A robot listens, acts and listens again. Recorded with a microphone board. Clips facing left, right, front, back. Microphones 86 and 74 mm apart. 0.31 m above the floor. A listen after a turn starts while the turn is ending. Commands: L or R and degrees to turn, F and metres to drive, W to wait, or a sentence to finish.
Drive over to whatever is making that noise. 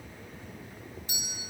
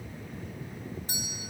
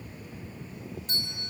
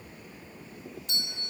R45
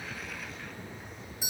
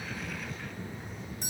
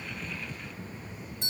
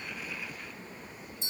F1.0
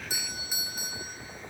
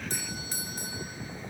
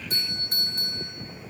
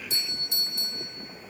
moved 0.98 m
L10
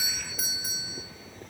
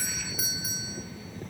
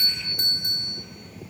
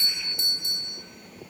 F1.0
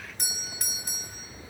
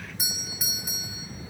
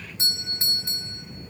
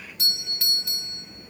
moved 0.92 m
R10
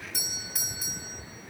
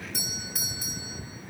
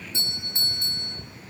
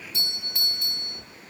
F1.0
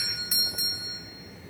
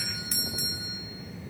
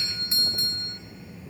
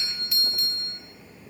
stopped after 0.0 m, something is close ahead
Arrived at the doorbell, straight ahead.